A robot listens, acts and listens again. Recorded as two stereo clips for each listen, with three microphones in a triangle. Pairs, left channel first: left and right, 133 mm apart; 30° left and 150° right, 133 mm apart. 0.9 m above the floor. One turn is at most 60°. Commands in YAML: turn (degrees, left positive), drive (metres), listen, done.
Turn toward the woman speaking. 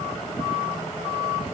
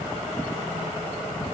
listen: true
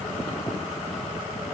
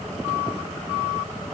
listen: true
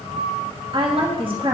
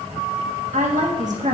turn: -60
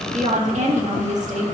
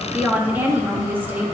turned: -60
turn: -60
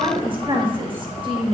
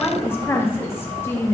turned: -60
turn: -40
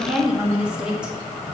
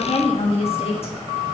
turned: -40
turn: -10
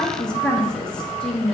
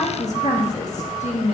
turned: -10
done: "Facing the woman speaking, 1 to 2 m away."